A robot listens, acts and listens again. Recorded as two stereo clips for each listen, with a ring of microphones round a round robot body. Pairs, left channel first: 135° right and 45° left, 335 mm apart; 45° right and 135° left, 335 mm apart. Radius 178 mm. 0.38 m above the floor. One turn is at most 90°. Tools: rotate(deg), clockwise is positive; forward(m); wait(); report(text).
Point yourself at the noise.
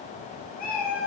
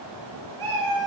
rotate(-90)
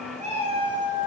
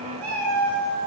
rotate(-90)
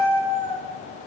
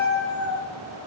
rotate(-75)
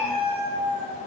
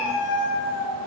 rotate(-10)
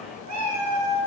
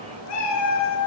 report("Facing the cat meowing, 1 to 2 m away.")